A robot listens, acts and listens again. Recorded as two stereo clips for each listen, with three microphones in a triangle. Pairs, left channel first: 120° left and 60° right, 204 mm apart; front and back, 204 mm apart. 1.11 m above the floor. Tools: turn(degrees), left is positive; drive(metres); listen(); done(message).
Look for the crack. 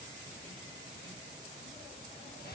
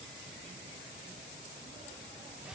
listen()
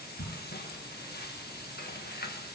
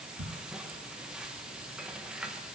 turn(degrees=160)
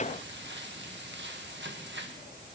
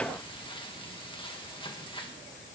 done("I heard a crack from this way, but can't make it out now.")